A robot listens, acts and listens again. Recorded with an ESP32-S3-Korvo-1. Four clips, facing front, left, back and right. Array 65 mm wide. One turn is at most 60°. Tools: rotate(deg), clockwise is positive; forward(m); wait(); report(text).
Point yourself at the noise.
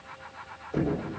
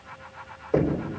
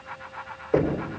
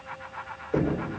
rotate(-60)
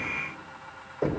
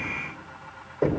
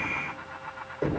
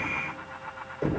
rotate(-60)
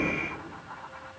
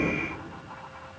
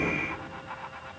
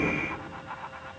rotate(-50)
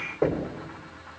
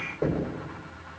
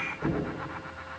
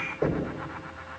report("Found it: knocking, straight ahead, over 4 m away.")